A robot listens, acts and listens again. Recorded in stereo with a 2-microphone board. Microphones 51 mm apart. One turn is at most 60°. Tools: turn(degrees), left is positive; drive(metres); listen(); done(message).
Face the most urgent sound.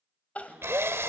turn(degrees=30)
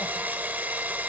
listen()
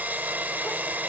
listen()
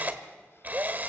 done("I heard crying, but can't make it out now. It was about straight ahead or 120° left.")